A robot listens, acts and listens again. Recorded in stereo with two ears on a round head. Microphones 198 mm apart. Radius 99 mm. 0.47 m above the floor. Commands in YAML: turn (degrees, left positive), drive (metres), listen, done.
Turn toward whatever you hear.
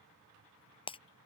turn: 25
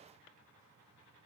listen: true
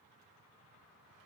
done: "I heard breaking glass, but can't make it out now. It was about straight ahead or 130° left."